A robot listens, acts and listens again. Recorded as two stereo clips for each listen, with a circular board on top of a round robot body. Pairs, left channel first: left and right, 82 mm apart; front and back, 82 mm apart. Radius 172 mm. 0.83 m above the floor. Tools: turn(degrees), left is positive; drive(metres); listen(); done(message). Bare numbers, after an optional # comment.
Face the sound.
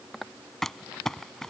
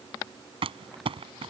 # The crumpling: 175° left.
turn(175)
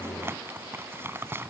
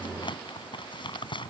# The crumpling is now 25° right.
turn(-25)
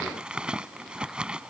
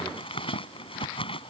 # The crumpling is now 10° right.
turn(-10)
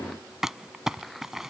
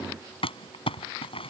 done("Found it: crumpling, straight ahead.")